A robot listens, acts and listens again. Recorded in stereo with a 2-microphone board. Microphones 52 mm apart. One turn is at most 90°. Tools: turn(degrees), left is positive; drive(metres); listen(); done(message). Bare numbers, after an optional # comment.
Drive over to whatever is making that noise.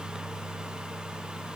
listen()
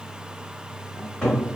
turn(30)
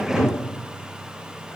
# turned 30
# So it is at 15° right.
turn(-15)
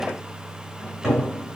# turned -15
drive(1.0)
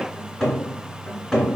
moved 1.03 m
drive(1.0)
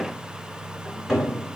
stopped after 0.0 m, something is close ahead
done("Arrived at the cupboard door, straight ahead.")